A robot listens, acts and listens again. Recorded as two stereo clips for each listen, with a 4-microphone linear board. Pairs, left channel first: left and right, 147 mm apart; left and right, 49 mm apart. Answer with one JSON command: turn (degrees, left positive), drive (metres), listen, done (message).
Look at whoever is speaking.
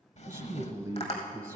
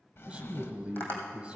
{"turn": -20}
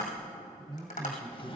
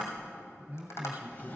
{"turn": -140}
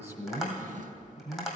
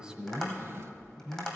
{"turn": -20}
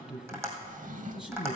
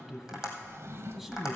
{"done": "Facing the man speaking."}